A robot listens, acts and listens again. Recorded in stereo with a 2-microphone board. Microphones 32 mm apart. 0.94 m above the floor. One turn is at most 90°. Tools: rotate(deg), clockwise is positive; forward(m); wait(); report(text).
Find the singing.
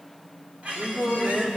rotate(70)
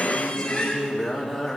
rotate(10)
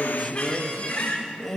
report("Facing the singing, 1 to 2 m away.")